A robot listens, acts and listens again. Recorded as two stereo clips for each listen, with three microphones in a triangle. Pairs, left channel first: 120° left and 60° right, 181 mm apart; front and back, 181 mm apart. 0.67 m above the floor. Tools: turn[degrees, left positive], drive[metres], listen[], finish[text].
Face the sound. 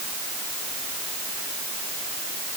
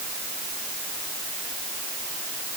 Action: listen[]
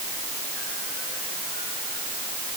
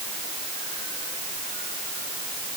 Action: listen[]
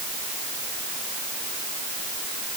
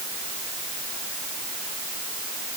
Action: finish[I can't make out anything.]